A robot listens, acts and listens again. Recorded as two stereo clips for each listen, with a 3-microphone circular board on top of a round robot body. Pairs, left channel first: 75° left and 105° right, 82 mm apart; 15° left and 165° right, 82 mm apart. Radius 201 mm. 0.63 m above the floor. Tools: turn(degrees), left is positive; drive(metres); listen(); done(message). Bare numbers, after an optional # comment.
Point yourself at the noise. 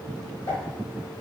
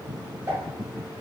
# The pop: 135° left.
turn(135)
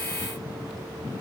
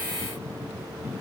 done("I heard a pop from this way, but can't make it out now.")